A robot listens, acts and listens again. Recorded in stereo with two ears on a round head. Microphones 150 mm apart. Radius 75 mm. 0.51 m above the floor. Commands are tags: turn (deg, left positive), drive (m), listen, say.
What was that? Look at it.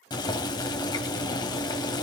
<turn deg="25"/>
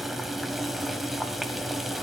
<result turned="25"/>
<say>Found it: boiling, straight ahead.</say>